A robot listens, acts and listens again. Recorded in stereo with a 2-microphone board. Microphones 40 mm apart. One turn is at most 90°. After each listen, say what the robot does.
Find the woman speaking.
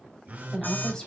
Turn 15° left.
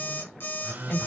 Turn 90° left.
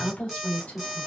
Turn 45° left.
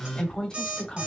Turn 20° left.
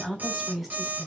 Facing the woman speaking.